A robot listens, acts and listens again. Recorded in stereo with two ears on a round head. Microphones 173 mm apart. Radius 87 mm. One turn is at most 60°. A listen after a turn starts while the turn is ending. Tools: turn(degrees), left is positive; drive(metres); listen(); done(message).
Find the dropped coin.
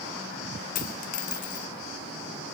turn(degrees=40)
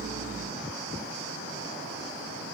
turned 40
listen()
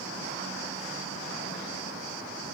done("I heard a dropped coin, but can't make it out now. It was about straight ahead or 100° left.")